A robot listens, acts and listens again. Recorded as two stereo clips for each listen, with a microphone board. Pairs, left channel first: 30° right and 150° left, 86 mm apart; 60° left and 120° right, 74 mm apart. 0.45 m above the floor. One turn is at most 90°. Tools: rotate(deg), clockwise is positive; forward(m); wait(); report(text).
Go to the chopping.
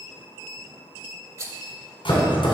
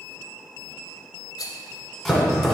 rotate(25)
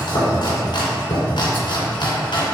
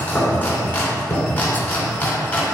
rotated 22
forward(1.0)
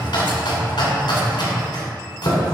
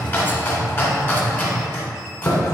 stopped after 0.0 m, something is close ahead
report("Blocked. The chopping is further on, straight ahead.")